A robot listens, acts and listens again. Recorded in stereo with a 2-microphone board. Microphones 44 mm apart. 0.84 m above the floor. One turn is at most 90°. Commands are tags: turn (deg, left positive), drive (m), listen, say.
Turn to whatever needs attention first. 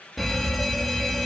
<turn deg="30"/>
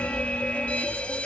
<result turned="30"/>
<turn deg="90"/>
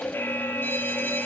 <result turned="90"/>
<turn deg="80"/>
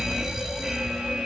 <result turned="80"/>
<say>Found it: a fire alarm, straight ahead.</say>